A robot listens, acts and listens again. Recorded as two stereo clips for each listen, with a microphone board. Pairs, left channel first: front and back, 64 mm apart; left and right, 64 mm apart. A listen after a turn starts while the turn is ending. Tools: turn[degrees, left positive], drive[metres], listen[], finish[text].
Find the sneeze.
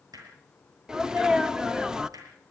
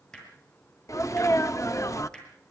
Thought: The sneeze: 105° left.
Action: turn[105]
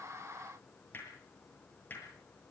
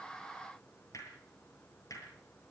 Action: finish[Facing where the sneeze came from. I can't hear it now.]